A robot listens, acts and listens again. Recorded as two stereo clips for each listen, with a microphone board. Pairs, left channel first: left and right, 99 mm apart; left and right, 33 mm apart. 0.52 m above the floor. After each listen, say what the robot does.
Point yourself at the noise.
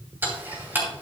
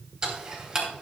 Turn 20° right.
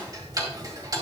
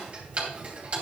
Turn 140° right.
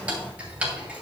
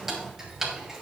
Turn 15° right.
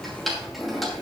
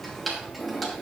Found it: ticking, straight ahead.